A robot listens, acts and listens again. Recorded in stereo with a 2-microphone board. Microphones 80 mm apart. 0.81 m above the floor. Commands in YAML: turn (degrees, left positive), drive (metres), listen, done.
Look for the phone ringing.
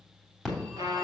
turn: 30
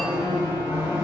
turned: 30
turn: 145
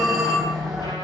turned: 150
done: "Found it: a phone ringing, straight ahead."